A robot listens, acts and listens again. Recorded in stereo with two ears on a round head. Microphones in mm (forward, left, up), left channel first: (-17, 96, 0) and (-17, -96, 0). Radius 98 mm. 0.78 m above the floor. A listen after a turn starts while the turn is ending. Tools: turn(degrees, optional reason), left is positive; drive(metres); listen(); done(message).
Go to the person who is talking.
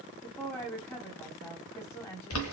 turn(degrees=30)
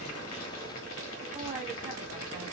listen()
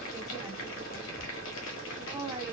listen()
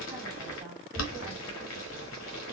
done("I heard a woman speaking, but can't make it out now. It was about 20° right or 140° left. I did not reach it.")